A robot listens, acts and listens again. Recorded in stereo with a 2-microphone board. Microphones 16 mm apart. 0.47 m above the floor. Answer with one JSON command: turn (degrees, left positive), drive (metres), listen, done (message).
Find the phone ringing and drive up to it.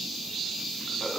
{"listen": true}
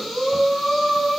{"listen": true}
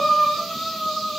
{"done": "I can't make out a phone ringing, only breathing."}